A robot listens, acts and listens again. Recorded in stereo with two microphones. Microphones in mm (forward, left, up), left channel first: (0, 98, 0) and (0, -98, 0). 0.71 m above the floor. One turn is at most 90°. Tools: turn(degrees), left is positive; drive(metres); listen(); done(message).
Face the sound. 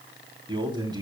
turn(degrees=-20)
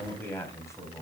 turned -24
turn(degrees=15)
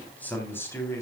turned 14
turn(degrees=15)
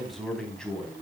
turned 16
done("Found it: a man speaking, straight ahead.")